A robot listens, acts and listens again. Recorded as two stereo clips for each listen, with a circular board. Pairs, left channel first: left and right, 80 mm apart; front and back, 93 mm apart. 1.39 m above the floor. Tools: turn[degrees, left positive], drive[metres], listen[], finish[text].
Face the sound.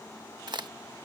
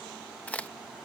Thought: The crack: 75° right.
Action: turn[-75]
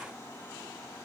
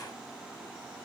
Action: finish[Facing where the crack came from. I can't hear it now.]